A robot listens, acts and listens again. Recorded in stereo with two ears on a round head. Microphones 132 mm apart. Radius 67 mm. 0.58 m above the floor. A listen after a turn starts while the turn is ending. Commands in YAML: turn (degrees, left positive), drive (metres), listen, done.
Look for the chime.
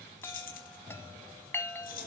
turn: 15
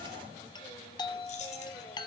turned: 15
turn: 150
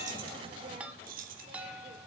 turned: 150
turn: -10
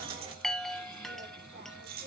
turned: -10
done: "Facing the chime."